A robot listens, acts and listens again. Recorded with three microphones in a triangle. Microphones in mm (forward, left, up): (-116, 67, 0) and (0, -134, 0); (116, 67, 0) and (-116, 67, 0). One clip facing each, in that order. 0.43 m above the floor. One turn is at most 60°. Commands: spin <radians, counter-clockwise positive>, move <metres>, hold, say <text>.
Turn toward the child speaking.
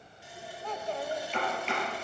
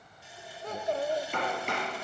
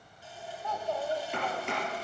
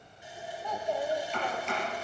spin -1.05
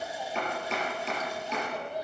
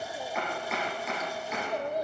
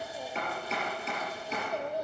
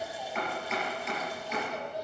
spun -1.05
spin -0.44
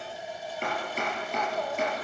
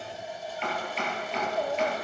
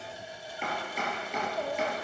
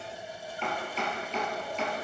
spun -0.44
say Facing the child speaking.